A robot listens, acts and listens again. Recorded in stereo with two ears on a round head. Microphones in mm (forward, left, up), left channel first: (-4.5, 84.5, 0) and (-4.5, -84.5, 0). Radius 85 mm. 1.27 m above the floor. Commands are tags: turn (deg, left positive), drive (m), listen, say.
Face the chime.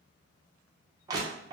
<listen/>
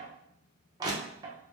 <listen/>
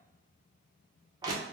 <say>I can't make out a chime to turn to.</say>